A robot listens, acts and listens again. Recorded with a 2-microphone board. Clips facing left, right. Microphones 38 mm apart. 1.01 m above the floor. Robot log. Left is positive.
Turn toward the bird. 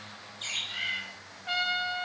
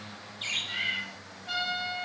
note: The bird: about 15° right or 165° right.
cmd yaw -15
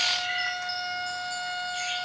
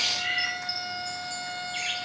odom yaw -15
note: So it is at 145° right.
cmd yaw -145
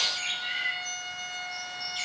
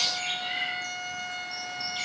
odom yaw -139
end: Facing the bird.